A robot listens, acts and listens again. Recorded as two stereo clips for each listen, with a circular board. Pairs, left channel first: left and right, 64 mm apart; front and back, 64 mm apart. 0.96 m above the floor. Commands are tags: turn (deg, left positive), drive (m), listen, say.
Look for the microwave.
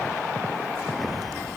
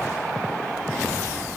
<listen/>
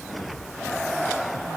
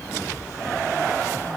<listen/>
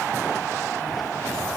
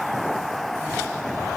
<say>I can't make out a microwave to turn to.</say>